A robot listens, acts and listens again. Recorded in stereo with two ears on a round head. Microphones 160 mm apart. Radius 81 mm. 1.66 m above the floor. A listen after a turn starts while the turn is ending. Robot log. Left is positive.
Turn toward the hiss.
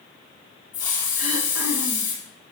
note: The hiss: about 20° left or 160° left.
cmd yaw +20
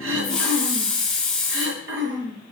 end: Facing the hiss.